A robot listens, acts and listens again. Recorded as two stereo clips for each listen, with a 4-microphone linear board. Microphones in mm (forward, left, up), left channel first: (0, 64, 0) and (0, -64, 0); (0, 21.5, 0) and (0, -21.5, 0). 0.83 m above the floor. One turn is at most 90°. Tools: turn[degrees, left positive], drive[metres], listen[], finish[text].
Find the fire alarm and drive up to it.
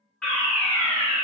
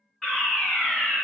Action: turn[30]
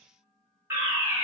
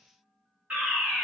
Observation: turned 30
Thought: So it is at 20° right.
Action: turn[-20]
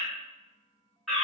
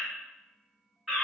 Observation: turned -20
Action: drive[1.0]
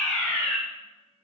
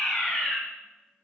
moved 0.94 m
Thought: The fire alarm is now 10° left.
Action: turn[10]
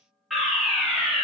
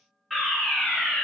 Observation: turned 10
Action: drive[1.0]
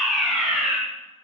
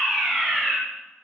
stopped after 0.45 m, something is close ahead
Action: finish[I am next to the fire alarm.]